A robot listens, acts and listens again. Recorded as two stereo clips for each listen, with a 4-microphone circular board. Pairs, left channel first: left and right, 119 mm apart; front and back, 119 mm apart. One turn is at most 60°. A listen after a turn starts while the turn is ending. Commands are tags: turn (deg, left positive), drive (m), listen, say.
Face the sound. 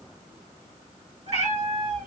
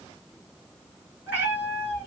<turn deg="-60"/>
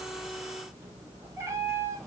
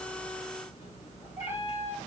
<turn deg="-25"/>
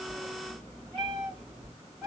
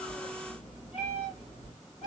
<say>Found it: a cat meowing, straight ahead, 2 to 4 m away.</say>